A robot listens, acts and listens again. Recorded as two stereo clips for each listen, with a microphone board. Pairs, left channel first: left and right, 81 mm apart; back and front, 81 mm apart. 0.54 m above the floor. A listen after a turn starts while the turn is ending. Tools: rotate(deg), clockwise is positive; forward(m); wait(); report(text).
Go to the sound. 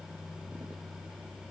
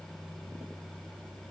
wait()
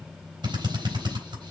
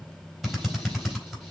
rotate(90)
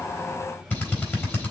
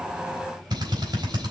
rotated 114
rotate(-25)
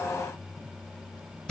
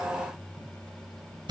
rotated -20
forward(1.0)
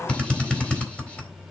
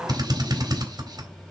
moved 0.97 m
rotate(-15)
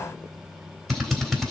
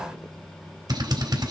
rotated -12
forward(1.0)
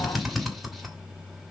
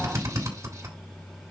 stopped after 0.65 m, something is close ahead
report("I am next to the drill.")